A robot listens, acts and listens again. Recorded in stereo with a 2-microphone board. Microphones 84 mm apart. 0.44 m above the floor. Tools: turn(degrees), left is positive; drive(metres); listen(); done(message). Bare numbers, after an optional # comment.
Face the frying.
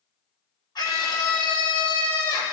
listen()
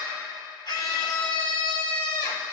listen()
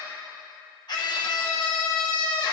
done("I can't make out frying, only a scream.")